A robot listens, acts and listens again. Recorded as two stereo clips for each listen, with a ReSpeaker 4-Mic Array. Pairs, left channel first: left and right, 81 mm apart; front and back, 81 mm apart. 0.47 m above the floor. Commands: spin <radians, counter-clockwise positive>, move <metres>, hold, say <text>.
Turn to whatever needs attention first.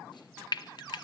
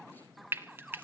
hold
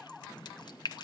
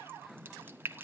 hold
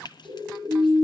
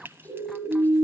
spin -2.09
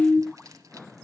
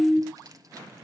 spin -0.26
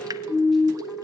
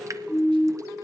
say Found it: a siren, straight ahead, over 4 m away.